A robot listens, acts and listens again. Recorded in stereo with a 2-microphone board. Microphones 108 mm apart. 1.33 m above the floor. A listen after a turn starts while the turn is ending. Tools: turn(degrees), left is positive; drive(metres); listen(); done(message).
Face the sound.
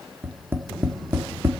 turn(degrees=-20)
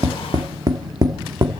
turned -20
turn(degrees=-135)
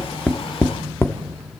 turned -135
turn(degrees=25)
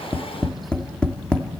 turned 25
turn(degrees=10)
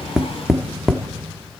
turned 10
done("Found it: tapping, straight ahead.")